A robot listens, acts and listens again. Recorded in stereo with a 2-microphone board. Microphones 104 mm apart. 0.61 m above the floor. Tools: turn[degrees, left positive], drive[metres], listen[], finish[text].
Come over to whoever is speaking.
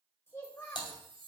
Thought: The child speaking: about 25° left or 155° left.
Action: turn[25]
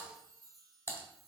Action: listen[]
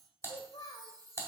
Thought: So it is at 130° left.
Action: turn[130]
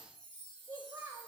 Thought: The child speaking is now 35° right.
Action: turn[-35]
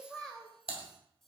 Action: drive[1.0]
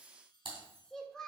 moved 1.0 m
Thought: The child speaking is now 10° left.
Action: turn[10]
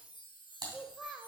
Action: drive[1.0]
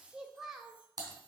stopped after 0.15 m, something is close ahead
Action: finish[Arrived at the child speaking, straight ahead.]